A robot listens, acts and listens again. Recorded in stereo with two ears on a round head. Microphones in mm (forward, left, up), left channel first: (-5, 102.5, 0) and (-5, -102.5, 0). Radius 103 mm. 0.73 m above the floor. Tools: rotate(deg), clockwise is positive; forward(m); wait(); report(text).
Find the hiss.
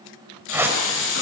rotate(-60)
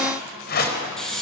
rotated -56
report("Facing the hiss, over 4 m away.")